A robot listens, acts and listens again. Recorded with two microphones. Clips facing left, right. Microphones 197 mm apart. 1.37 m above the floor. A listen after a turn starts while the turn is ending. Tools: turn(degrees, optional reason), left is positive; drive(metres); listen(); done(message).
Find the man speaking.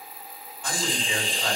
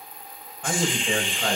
turn(degrees=-60, reason="The man speaking: about 60° right or 120° right.")
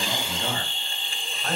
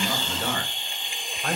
turn(degrees=-55, reason="So it is at 55° right.")
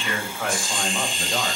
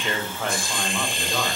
turn(degrees=10, reason="The man speaking is now 10° left.")
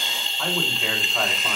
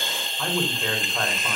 done("Found it: a man speaking, straight ahead, over 4 m away.")